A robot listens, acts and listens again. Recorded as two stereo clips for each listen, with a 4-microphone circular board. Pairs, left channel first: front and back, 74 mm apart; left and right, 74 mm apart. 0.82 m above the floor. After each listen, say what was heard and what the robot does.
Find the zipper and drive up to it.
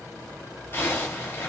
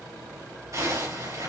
The zipper: 55° right. Turn 55° right.
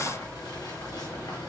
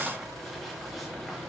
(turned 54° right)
Keep listening.
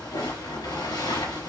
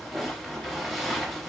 Drive 1.0 m forward.
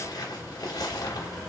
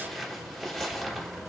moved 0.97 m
Drive 1.0 m forward.
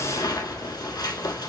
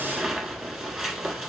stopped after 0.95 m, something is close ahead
The zipper is now 10° right. Turn 10° right.
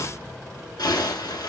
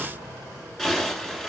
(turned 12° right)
Arrived at the zipper, straight ahead.